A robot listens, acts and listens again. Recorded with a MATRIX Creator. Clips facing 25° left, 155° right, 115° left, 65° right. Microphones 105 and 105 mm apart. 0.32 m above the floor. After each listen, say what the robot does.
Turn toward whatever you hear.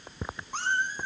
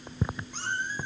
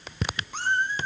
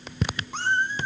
Turn 15° right.
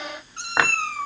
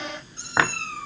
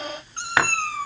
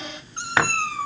Facing the cat meowing.